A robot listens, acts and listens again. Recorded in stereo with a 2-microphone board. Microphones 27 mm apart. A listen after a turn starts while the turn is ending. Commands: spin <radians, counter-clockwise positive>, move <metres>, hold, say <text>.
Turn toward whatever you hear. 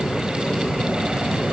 hold
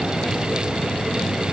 hold
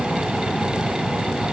say I can't make out anything.